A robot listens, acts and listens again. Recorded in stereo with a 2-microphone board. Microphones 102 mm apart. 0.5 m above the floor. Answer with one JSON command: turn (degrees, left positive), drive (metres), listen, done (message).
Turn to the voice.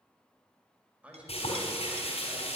{"turn": -30}
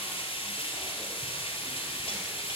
{"listen": true}
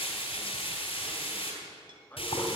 {"turn": 20}
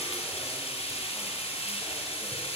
{"listen": true}
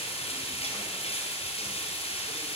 {"listen": true}
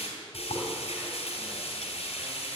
{"done": "I heard a man speaking from this way, but can't make it out now."}